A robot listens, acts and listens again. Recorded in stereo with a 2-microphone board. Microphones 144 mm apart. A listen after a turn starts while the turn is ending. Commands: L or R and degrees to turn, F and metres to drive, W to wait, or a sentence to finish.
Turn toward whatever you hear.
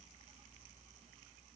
W
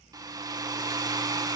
R25
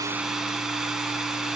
Facing the hair dryer.